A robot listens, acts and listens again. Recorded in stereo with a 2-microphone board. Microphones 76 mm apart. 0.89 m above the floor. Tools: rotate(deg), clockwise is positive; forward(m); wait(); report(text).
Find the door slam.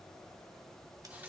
wait()
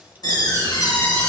rotate(-65)
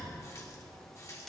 wait()
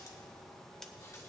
report("I heard a door slam, but can't make it out now. It was about straight ahead or 50° left.")